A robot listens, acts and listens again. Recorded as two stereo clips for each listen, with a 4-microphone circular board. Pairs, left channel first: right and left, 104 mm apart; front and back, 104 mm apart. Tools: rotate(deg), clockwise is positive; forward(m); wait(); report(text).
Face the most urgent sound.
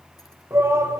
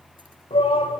rotate(-25)
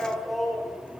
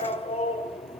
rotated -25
report("Facing the shout.")